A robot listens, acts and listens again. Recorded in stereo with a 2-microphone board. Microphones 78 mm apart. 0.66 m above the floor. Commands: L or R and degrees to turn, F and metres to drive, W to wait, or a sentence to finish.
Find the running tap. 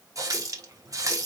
R50
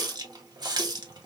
R75
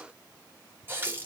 R30
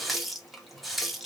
Facing the running tap, under 1 m away.